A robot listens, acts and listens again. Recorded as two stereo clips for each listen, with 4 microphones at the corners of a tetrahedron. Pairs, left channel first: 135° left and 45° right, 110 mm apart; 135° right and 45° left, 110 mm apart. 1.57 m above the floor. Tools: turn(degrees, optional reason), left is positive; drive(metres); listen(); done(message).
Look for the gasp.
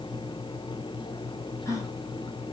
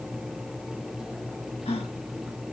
turn(degrees=-165, reason="The gasp: 165° right.")
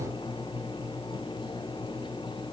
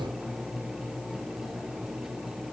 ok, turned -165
done("I heard a gasp from this way, but can't make it out now.")